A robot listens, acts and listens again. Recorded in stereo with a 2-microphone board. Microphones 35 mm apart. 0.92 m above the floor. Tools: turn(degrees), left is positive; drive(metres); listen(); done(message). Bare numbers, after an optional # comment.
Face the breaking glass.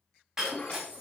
turn(-30)
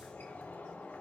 listen()
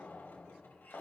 done("I heard breaking glass, but can't make it out now. It was about 15° left or 135° right.")